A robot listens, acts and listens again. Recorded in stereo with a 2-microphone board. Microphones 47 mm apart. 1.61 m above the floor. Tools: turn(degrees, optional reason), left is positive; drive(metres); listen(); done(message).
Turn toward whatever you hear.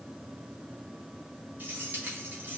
turn(degrees=-40, reason="The keys jangling: about 40° right or 140° right.")
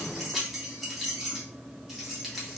done("Facing the keys jangling, 1 to 2 m away.")